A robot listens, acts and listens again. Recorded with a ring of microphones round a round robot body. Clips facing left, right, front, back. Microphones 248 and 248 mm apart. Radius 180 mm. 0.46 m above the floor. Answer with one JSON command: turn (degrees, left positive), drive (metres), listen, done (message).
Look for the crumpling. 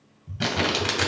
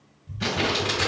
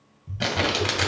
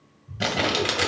{"turn": 95}
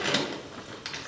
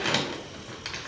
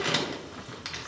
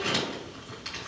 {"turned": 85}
{"turn": 10}
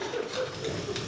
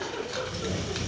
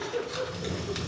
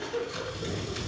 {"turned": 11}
{"done": "Facing the crumpling, 1 to 2 m away."}